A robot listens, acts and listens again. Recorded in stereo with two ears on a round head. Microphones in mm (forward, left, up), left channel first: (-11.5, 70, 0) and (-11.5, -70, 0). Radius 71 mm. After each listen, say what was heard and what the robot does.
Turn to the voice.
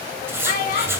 The child speaking: about 55° left or 125° left. Turn 55° left.
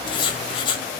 Keep listening.
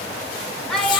Found it: a child speaking, straight ahead, 2 to 4 m away.